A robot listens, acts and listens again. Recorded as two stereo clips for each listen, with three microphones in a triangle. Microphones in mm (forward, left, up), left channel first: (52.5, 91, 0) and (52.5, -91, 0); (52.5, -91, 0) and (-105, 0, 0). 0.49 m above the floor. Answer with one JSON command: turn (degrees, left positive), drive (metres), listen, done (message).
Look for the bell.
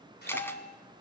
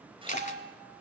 {"turn": 130}
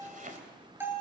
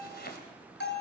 {"turn": -10}
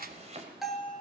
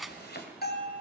{"done": "Found it: a bell, straight ahead."}